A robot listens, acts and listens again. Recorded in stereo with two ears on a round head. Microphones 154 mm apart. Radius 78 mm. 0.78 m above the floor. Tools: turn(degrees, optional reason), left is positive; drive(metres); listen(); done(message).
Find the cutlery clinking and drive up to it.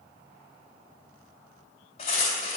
turn(degrees=40, reason="The cutlery clinking: about 40° left or 140° left.")
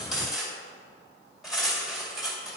drive(metres=1.0)
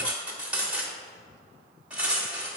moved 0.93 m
turn(degrees=-10, reason="The cutlery clinking is now 10° right.")
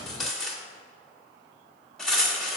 drive(metres=1.0)
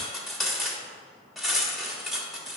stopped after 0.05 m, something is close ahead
done("Arrived at the cutlery clinking, straight ahead.")